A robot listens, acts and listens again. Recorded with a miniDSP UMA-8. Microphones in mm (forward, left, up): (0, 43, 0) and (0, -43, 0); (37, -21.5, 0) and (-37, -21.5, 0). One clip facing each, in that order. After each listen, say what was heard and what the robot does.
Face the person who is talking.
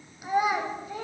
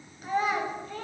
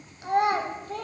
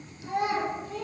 The child speaking: 10° left. Turn 10° left.
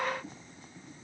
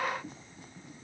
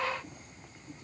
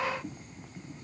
Keep listening.
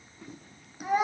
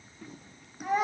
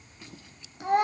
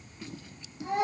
Found it: a child speaking, straight ahead.